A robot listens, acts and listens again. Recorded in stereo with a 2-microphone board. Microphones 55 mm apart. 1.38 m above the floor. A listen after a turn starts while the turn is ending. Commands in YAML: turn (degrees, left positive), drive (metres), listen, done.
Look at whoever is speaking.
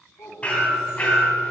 turn: 65
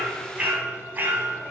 listen: true
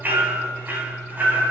listen: true
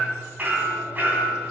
done: "I heard a child speaking, but can't make it out now. It was about straight ahead or 50° left."